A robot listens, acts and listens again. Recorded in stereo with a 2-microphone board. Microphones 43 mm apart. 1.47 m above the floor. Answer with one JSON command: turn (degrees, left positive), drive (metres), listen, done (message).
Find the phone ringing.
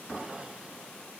{"listen": true}
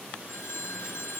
{"turn": 75}
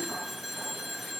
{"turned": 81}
{"done": "Found it: a phone ringing, straight ahead."}